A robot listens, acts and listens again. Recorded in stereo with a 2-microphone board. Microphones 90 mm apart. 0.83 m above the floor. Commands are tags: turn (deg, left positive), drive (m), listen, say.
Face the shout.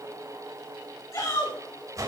<turn deg="35"/>
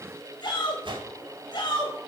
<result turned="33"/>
<turn deg="105"/>
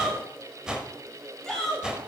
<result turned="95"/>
<say>Found it: a shout, straight ahead.</say>